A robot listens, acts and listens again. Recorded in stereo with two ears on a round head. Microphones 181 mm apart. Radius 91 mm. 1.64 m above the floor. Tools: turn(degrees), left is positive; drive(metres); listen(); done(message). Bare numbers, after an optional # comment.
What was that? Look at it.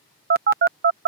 # The phone buzzing: about 50° right or 130° right.
turn(-50)
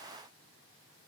listen()
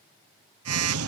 # So it is at 85° right.
turn(-85)
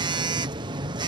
# The phone buzzing is now 25° right.
turn(-25)
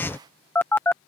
# The phone buzzing is now 10° left.
turn(10)
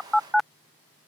done("Found it: a phone buzzing, straight ahead.")